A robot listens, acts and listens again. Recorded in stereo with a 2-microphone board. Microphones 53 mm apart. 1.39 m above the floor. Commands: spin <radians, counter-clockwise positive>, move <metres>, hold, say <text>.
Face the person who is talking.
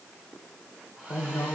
spin 1.13
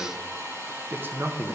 spin -0.87
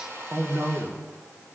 spin -0.87
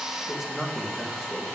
say Found it: a man speaking, straight ahead, 2 to 4 m away.